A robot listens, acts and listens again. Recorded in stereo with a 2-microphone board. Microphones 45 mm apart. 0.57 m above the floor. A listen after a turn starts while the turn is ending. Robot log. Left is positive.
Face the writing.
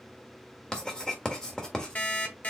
note: The writing: about 20° left or 160° left.
cmd yaw +20
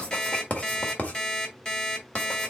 note: So it is at 140° left.
cmd yaw +140
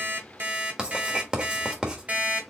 note: The writing is now 20° right.
cmd yaw -20
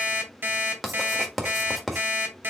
end: Found it: writing, straight ahead, 1 to 2 m away.